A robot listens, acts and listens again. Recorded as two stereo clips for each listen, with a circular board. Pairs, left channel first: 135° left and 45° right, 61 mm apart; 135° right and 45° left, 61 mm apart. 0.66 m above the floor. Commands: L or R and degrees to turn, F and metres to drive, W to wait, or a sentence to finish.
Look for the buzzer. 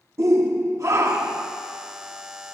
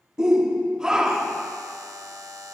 L30
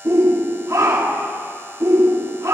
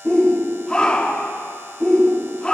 Facing the buzzer.